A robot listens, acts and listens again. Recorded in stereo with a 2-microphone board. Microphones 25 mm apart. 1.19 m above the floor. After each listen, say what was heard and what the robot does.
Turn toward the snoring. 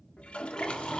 The snoring: about 40° left or 140° left. Turn 40° left.
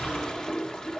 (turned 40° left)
So it is at 100° left. Turn 100° left.
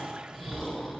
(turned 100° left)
The snoring is now 15° left. Turn 15° left.
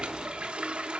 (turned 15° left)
Keep listening.
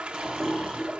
Keep listening.
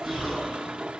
Facing the snoring.